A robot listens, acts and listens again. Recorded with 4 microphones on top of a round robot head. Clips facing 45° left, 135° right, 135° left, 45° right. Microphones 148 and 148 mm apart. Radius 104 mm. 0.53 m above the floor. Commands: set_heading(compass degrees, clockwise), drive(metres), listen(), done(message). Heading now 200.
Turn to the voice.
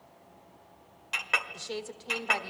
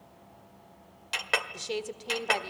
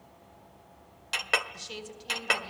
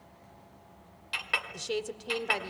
set_heading(265)
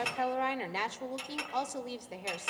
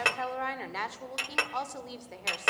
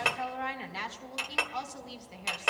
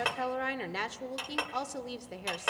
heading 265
set_heading(285)
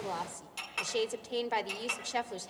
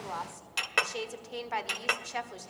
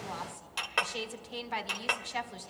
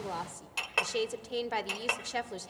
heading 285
set_heading(295)
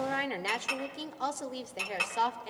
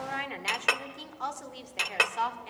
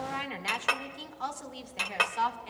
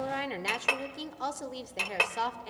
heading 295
done("Facing the woman speaking.")